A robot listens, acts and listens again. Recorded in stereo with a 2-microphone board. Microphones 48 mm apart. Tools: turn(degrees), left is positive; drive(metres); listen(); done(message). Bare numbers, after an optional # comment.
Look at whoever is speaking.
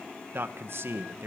# The man speaking: about 55° right or 125° right.
turn(-55)
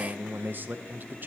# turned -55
# So it is at 50° right.
turn(-50)
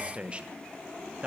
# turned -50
# The man speaking is now 25° right.
turn(-25)
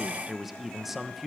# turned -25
done("Facing the man speaking, 1 to 2 m away.")